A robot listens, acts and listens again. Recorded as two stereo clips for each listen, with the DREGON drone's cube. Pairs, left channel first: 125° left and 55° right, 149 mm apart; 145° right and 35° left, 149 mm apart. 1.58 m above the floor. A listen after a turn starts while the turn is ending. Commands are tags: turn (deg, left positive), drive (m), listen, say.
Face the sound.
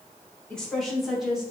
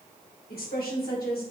<turn deg="-140"/>
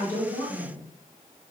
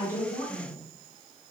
<turn deg="-40"/>
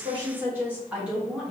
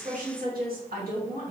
<turn deg="30"/>
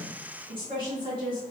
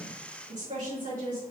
<say>Facing the woman speaking.</say>